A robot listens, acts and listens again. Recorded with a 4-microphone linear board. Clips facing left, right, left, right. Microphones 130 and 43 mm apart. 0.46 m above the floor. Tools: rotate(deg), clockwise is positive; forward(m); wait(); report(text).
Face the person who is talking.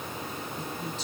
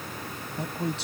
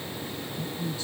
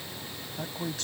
rotate(75)
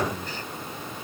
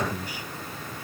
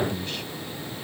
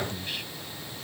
rotate(10)
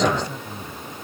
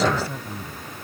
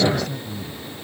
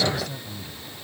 report("Found it: a man speaking, straight ahead.")